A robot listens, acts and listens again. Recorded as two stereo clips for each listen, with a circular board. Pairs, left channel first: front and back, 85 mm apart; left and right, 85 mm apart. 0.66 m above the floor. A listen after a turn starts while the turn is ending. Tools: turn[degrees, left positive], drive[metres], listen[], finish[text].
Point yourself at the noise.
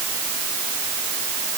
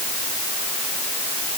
Action: listen[]
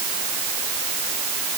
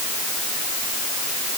Action: listen[]
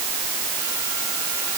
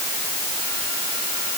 Action: finish[I can't make out anything.]